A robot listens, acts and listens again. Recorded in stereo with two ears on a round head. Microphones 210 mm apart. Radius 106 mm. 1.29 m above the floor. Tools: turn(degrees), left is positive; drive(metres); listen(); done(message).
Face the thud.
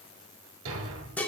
turn(degrees=-60)
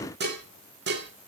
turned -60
listen()
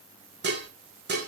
done("I heard a thud, but can't make it out now. It was about straight ahead or 60° right.")